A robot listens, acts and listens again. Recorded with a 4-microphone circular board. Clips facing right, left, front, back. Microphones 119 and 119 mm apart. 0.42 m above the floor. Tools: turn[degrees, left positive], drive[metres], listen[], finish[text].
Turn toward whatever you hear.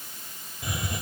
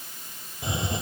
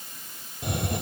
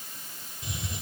Thought: The hiss: 25° left.
Action: turn[25]
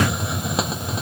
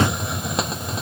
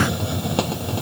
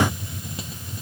Action: finish[Found it: a hiss, straight ahead.]